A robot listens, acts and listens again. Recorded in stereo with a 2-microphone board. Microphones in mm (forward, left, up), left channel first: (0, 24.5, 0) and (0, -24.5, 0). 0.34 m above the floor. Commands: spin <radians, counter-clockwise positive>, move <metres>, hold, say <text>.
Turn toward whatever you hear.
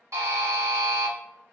spin -1.57
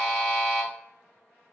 say Found it: a buzzer, straight ahead, 1 to 2 m away.